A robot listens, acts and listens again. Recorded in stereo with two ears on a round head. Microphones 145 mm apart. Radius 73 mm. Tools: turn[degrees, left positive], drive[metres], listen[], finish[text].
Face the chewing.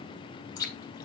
Thought: The chewing: about 25° left or 155° left.
Action: turn[25]
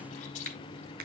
Action: listen[]
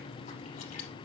Action: listen[]
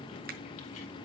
Action: finish[I heard chewing, but can't make it out now. It was about straight ahead or 130° left.]